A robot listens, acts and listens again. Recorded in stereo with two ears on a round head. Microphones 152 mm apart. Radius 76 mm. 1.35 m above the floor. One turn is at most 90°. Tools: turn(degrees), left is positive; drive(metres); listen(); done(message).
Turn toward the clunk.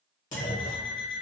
turn(degrees=55)
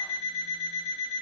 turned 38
listen()
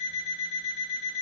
done("I heard a clunk, but can't make it out now. It was about 15° left or 90° left.")